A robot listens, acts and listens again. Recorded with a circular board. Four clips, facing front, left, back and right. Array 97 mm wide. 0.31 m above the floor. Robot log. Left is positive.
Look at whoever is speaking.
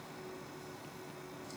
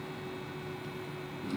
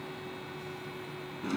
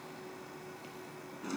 cmd idle
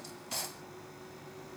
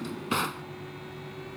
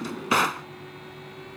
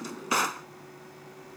cmd idle
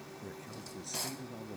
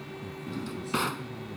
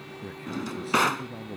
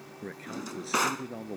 note: The man speaking: 110° right.
cmd yaw -110
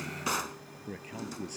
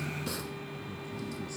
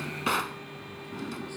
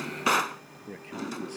note: The man speaking is now 50° right.
cmd yaw -50
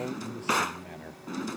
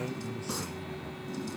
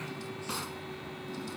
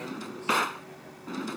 cmd idle
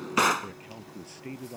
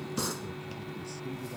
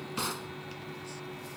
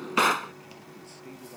end: Found it: a man speaking, straight ahead.